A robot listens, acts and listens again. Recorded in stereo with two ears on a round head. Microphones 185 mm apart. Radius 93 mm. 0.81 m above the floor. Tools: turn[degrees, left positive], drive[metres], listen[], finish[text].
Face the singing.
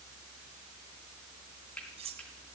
Action: listen[]
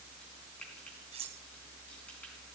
Action: listen[]
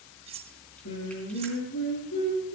Thought: The singing: about 65° left or 115° left.
Action: turn[65]
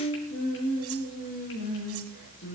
Thought: So it is at 55° left.
Action: turn[55]
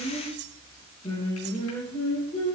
Thought: The singing is now 25° left.
Action: turn[25]
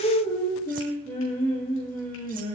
Thought: The singing is now 10° left.
Action: turn[10]
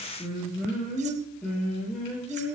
Action: finish[Found it: singing, straight ahead.]